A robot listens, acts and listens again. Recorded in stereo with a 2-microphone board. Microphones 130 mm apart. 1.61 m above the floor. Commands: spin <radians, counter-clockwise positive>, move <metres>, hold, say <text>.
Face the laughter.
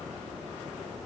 hold
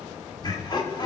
spin 0.61
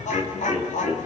spin 1.92
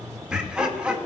spin -0.17
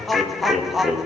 say Found it: laughter, straight ahead, 2 to 4 m away.